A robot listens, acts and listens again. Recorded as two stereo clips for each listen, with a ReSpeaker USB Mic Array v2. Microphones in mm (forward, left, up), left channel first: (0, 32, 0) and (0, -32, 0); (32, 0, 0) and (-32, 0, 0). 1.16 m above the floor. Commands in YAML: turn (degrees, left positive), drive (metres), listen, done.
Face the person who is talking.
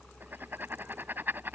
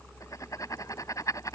listen: true
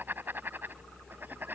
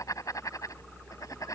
listen: true
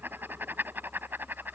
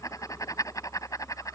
done: "I can't make out anyone speaking, only writing."